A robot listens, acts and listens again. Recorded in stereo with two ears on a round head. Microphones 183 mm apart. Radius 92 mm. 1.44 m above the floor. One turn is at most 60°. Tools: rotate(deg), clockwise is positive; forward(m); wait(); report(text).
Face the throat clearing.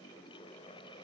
wait()
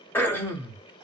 rotate(-30)
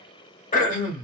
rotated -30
rotate(-60)
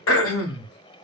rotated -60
rotate(-60)
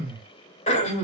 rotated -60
rotate(-35)
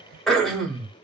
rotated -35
report("Found it: throat clearing, straight ahead.")